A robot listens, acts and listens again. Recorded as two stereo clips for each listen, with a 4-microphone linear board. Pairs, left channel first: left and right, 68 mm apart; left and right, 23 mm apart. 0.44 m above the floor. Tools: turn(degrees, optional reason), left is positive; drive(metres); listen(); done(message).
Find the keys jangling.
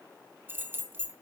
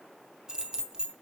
turn(degrees=-30, reason="The keys jangling: about 30° right or 150° right.")
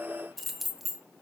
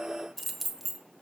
done("Found it: keys jangling, straight ahead, 1 to 2 m away.")